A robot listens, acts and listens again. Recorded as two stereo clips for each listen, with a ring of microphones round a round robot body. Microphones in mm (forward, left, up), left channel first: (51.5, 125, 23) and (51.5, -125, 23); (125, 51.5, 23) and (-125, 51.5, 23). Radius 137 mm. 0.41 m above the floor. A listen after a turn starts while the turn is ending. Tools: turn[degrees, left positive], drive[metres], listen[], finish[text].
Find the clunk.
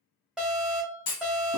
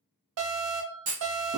Thought: The clunk: 120° left.
Action: turn[120]
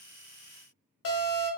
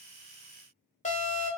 Action: finish[I heard a clunk from this way, but can't make it out now.]